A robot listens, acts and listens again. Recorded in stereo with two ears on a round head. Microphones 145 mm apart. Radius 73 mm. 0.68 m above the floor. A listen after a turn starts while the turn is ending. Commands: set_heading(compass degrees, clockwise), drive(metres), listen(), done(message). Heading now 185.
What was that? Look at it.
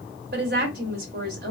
set_heading(245)
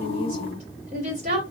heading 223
set_heading(273)
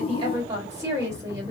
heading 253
set_heading(273)
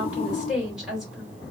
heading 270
done("Found it: a woman speaking, straight ahead.")